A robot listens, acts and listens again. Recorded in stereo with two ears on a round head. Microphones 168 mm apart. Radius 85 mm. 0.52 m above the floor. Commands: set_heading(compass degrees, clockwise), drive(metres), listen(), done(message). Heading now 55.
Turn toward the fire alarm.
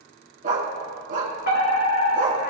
set_heading(355)
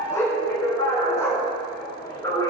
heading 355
set_heading(335)
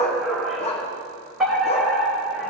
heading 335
done("Found it: a fire alarm, straight ahead, 2 to 4 m away.")